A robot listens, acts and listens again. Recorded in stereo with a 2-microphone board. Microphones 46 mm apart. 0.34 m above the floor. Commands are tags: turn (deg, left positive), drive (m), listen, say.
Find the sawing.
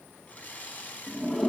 <turn deg="35"/>
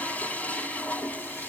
<listen/>
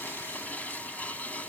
<listen/>
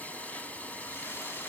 <say>I heard sawing, but can't make it out now. It was about straight ahead or 110° left.</say>